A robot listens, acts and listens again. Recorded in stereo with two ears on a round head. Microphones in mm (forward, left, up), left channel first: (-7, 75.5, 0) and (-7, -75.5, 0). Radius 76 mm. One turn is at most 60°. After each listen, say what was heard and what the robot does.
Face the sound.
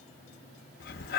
The breathing: about 60° left or 120° left. Turn 60° left.
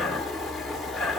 Facing the breathing, under 1 m away.